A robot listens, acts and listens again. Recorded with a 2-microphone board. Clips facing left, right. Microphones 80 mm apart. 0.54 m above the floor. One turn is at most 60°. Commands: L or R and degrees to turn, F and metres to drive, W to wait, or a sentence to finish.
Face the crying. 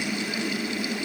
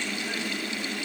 W
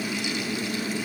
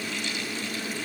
W
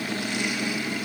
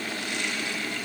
I can't make out crying to turn to.